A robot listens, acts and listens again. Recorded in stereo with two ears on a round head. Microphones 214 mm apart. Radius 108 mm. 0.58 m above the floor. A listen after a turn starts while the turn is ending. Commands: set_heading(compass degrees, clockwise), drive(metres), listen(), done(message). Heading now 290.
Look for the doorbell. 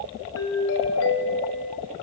set_heading(235)
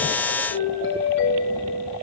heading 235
set_heading(170)
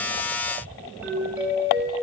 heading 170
done("Facing the doorbell, over 4 m away.")